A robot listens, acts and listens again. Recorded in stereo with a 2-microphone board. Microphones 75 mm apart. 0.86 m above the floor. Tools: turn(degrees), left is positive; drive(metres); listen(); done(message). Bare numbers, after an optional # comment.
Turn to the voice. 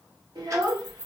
turn(-90)
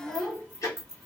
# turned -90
# So it is at 10° left.
turn(10)
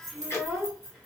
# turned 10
done("Found it: a child speaking, straight ahead, 1 to 2 m away.")